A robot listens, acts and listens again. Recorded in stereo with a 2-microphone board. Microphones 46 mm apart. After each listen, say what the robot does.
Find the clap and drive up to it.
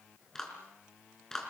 Turn 30° left.
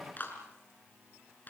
Turn 140° left.
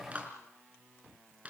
Turn 30° right.
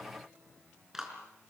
Turn 10° right.
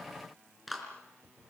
Drive 1.0 m forward.
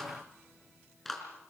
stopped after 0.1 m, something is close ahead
Blocked. The clap is further on, straight ahead.